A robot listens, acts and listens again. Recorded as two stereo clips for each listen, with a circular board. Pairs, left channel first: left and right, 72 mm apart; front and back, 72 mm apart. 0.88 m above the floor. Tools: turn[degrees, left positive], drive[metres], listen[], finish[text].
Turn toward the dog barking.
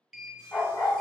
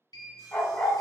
Thought: The dog barking: 70° left.
Action: turn[70]
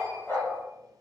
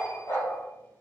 Thought: The dog barking is now 35° left.
Action: turn[35]
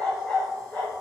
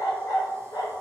Thought: The dog barking is now 25° left.
Action: turn[25]
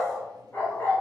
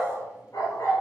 Thought: The dog barking is now 35° left.
Action: turn[35]
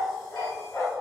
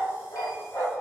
Thought: The dog barking is now 40° left.
Action: turn[40]
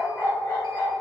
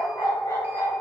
Thought: The dog barking is now 40° left.
Action: turn[40]
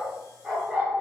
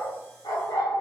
Thought: The dog barking is now 10° right.
Action: turn[-10]
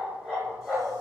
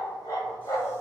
Action: finish[Facing the dog barking.]